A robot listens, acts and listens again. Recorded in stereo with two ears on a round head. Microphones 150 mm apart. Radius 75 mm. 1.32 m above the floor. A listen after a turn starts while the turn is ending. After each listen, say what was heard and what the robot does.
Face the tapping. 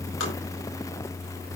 Keep listening.
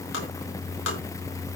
Turn 90° left.
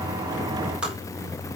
Found it: tapping, straight ahead.